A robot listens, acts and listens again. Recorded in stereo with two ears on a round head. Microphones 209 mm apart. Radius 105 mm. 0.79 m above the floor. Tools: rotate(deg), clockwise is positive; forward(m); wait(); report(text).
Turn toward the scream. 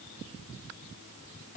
wait()
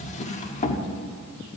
wait()
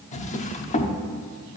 report("I can't make out a scream, only a drawer.")